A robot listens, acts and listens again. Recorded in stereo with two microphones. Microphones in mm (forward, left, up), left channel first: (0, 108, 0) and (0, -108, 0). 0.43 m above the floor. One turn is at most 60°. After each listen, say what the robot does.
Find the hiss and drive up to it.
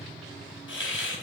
Turn 60° left.
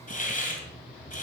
Turn 45° left.
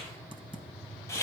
Turn 15° left.
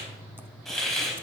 Drive 1.0 m forward.
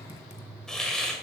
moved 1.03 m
Drive 1.0 m forward.
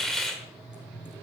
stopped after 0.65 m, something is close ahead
Arrived at the hiss, straight ahead.